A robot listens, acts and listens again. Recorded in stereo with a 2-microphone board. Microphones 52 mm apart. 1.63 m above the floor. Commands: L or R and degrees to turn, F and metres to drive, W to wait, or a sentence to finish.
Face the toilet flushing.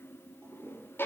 R60
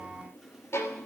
W
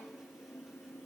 W
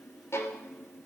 I heard a toilet flushing, but can't make it out now. It was about straight ahead or 60° right.